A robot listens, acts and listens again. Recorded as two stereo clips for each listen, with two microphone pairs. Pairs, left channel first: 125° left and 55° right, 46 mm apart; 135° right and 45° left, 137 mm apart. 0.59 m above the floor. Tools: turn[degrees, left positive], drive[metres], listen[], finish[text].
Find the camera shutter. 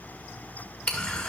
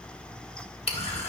Thought: The camera shutter: 170° right.
Action: turn[-170]
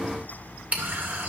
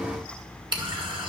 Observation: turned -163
Action: finish[Facing the camera shutter.]